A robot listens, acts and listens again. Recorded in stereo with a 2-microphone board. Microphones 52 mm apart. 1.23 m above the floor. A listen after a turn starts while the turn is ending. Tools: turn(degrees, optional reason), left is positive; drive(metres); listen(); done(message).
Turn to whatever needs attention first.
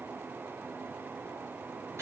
listen()
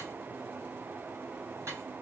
listen()
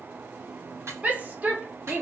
turn(degrees=-30, reason="The shout: about 30° right or 150° right.")
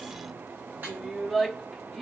done("Found it: a shout, straight ahead, 1 to 2 m away.")